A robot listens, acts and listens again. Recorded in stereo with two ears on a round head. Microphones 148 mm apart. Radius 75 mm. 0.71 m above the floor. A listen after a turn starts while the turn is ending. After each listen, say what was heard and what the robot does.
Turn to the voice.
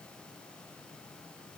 Keep listening.
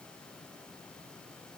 Keep listening.
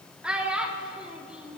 Turn 30° right.
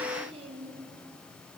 Keep listening.
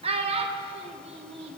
So it is at 140° right. Turn 140° right.
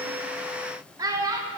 The child speaking is now 20° right. Turn 20° right.
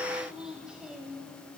Facing the child speaking.